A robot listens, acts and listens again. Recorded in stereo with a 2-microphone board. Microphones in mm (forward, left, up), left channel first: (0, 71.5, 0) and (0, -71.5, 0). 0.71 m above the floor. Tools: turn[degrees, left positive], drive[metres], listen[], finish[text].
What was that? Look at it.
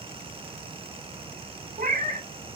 Thought: The cat meowing: about 70° right or 110° right.
Action: turn[-70]
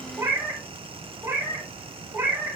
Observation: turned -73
Thought: So it is at 15° right.
Action: turn[-15]
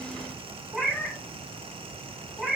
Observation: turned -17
Action: finish[Facing the cat meowing.]